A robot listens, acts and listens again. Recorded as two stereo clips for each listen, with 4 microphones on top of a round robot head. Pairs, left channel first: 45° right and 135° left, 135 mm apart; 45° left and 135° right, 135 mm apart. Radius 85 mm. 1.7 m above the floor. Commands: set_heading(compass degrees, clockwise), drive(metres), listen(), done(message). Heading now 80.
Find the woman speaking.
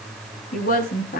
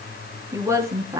set_heading(145)
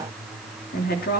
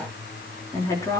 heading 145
set_heading(170)
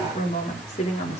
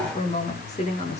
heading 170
done("Facing the woman speaking.")